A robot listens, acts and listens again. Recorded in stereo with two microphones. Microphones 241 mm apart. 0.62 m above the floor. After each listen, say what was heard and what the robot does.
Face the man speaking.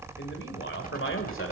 The man speaking: about 65° left or 115° left. Turn 65° left.
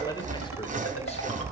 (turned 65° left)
So it is at 20° left. Turn 20° left.
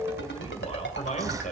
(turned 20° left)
The man speaking is now 35° left. Turn 35° left.
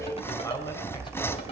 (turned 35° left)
The man speaking is now 15° left. Turn 15° left.
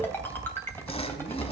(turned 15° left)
Keep listening.
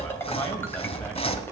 Keep listening.
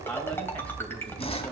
The man speaking is now 10° left. Turn 10° left.
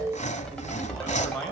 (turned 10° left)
Found it: a man speaking, straight ahead.